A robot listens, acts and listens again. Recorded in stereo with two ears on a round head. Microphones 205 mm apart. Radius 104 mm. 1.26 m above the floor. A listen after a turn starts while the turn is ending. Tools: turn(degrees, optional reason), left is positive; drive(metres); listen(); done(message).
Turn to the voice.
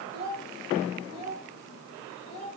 turn(degrees=70, reason="The child speaking: about 70° left or 110° left.")
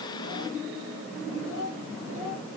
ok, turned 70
turn(degrees=60, reason="So it is at 60° left.")
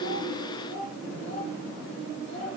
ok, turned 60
turn(degrees=25, reason="The child speaking is now 25° left.")
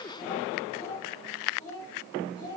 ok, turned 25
turn(degrees=15, reason="The child speaking is now 15° left.")
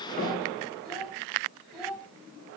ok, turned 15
done("Facing the child speaking.")